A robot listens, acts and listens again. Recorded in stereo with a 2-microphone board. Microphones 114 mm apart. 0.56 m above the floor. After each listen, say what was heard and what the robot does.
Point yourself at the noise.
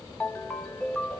The ringtone: about 15° left or 165° left. Turn 15° left.
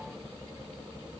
Keep listening.
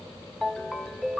Found it: a ringtone, straight ahead.